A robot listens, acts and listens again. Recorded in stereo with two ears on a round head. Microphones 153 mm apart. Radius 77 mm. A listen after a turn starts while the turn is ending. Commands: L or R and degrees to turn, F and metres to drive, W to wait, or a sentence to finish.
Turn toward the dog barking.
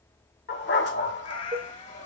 L90
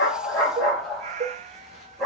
Found it: a dog barking, straight ahead.